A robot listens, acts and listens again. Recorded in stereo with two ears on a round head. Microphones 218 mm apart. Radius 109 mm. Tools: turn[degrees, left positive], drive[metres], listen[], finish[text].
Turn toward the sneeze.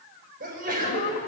Thought: The sneeze: about 35° right or 145° right.
Action: turn[-35]
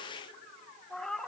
Action: listen[]
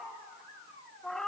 Action: finish[I heard a sneeze, but can't make it out now. It was about straight ahead or 110° right.]